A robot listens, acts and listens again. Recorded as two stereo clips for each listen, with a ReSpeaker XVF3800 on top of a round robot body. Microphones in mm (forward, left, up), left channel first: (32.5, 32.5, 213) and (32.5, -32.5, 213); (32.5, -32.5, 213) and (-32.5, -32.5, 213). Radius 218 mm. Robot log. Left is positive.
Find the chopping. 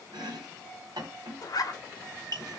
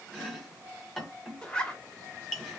note: The chopping: 85° right.
cmd yaw -85
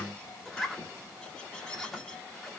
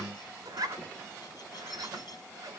cmd idle
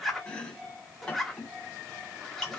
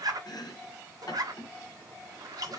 note: The chopping is now 20° left.
cmd yaw +20
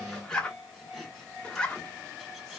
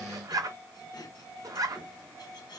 end: Facing the chopping.